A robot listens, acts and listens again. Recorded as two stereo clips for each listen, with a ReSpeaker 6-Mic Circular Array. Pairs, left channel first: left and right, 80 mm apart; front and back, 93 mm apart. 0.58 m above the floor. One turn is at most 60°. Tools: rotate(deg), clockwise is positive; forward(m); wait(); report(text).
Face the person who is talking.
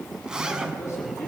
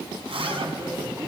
rotate(-60)
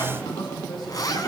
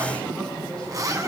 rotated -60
rotate(-60)
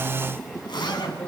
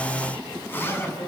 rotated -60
rotate(-15)
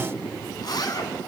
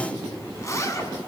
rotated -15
report("Facing the man speaking, over 4 m away.")